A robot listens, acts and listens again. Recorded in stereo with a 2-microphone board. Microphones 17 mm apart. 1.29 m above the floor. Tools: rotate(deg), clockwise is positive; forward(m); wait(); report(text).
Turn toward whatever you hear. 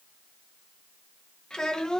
rotate(-50)
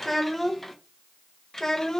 rotate(-35)
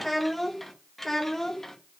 rotate(-25)
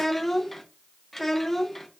rotate(-15)
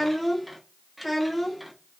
report("Facing the child speaking, 1 to 2 m away.")